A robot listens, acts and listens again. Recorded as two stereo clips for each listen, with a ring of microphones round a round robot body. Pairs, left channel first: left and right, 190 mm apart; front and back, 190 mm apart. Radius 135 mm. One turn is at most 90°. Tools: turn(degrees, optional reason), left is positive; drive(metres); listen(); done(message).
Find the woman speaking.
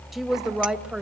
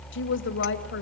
done("Facing the woman speaking.")